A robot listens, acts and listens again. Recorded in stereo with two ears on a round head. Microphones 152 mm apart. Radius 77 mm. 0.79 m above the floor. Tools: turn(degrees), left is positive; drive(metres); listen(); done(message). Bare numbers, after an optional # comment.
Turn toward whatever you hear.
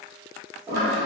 # The toilet flushing: about 15° right or 165° right.
turn(-15)
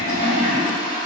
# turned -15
done("Found it: a toilet flushing, straight ahead, 1 to 2 m away.")